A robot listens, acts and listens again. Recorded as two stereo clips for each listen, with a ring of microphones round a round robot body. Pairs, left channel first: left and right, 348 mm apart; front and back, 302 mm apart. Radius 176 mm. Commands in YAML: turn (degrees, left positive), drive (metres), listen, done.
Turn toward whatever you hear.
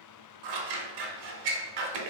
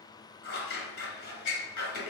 turn: -65
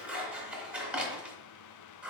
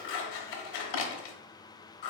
done: "Facing the scissors."